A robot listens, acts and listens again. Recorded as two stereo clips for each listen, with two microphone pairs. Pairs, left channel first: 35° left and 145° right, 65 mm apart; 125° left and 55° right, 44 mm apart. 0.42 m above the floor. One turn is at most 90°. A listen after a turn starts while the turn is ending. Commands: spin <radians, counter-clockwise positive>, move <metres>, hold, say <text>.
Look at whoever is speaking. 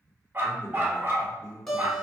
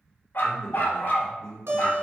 spin 1.31
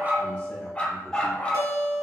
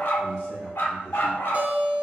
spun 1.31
hold
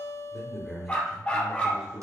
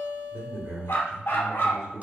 spin -1.31
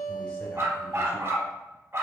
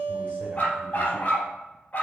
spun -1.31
hold
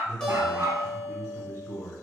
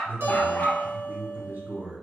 spin -0.44
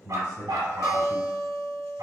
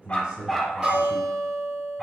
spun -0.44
spin 0.26
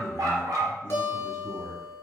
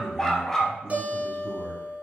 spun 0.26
say Found it: a man speaking, straight ahead, 1 to 2 m away.